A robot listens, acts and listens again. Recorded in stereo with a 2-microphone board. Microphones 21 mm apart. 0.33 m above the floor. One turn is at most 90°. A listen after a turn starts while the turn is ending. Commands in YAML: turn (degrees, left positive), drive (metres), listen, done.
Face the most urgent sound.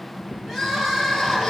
turn: -15
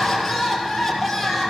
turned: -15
done: "Found it: crying, straight ahead."